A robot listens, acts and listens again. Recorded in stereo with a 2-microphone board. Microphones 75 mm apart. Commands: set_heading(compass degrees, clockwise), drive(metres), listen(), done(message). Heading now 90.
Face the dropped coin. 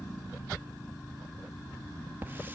listen()
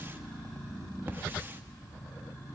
listen()
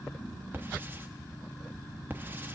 done("I can't make out a dropped coin, only a hiss.")